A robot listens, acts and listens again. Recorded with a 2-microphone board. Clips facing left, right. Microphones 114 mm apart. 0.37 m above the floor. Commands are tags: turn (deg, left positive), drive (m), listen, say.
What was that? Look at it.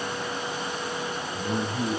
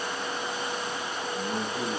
<turn deg="30"/>
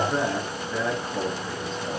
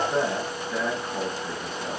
<say>Facing the man speaking.</say>